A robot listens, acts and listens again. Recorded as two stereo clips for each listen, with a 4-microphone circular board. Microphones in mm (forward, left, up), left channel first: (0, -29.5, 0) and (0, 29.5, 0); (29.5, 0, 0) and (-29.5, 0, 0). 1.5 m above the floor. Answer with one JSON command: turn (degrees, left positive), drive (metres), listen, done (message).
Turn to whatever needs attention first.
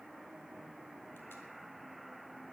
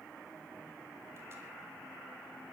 {"listen": true}
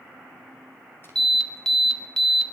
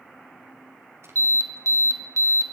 {"turn": -170}
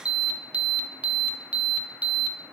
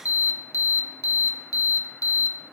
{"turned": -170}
{"turn": 20}
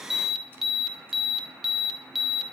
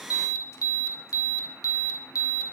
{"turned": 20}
{"done": "Facing the alarm, 1 to 2 m away."}